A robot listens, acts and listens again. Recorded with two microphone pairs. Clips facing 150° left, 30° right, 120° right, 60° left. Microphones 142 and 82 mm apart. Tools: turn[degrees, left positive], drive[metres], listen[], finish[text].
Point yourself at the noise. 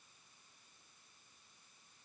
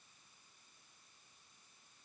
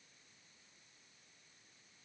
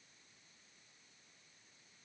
Action: listen[]
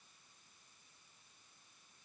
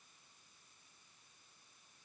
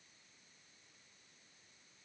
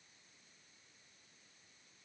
Action: listen[]
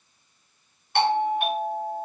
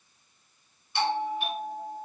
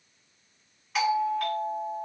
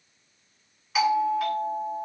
Thought: The doorbell: 145° left.
Action: turn[145]
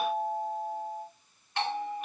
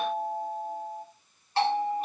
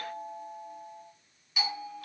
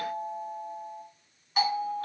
Thought: The doorbell is now 20° left.
Action: turn[20]
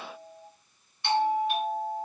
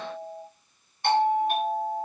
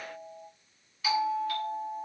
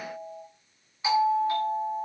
Action: finish[Facing the doorbell.]